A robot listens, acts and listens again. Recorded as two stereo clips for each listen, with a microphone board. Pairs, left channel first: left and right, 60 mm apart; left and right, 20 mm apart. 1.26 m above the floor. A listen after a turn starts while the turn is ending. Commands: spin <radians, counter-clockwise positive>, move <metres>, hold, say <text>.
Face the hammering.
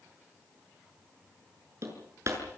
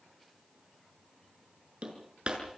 spin -0.96
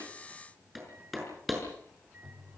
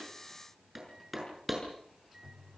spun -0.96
say Found it: hammering, straight ahead, over 4 m away.